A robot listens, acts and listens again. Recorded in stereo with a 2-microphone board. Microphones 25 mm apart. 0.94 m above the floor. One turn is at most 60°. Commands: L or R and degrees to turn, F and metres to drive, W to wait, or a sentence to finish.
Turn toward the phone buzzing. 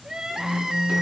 L60
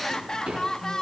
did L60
W
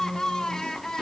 L60
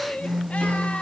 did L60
Facing the phone buzzing, 1 to 2 m away.